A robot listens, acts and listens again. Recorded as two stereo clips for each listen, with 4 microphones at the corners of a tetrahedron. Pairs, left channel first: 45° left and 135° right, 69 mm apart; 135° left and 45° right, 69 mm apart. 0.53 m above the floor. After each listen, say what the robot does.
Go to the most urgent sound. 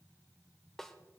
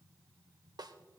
Keep listening.
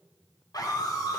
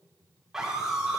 Turn 35° left.
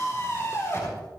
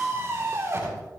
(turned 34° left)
Drive 1.0 m forward.
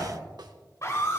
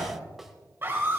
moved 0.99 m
Drive 1.0 m forward.
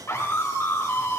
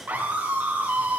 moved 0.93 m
Turn 10° left.
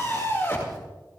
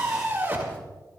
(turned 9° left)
Drive 1.0 m forward.
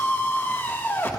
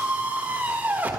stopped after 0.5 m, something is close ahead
Arrived at the scream, straight ahead.